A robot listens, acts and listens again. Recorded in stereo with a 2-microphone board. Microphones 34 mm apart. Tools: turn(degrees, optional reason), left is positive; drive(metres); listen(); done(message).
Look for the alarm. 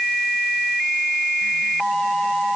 listen()
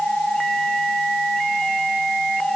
listen()
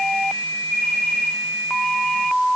done("I can't make out an alarm.")